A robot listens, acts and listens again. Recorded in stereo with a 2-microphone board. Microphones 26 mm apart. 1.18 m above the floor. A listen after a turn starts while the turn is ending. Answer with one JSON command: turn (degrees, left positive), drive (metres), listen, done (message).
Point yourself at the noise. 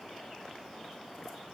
{"listen": true}
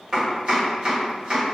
{"turn": -40}
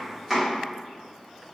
{"done": "Found it: chopping, straight ahead."}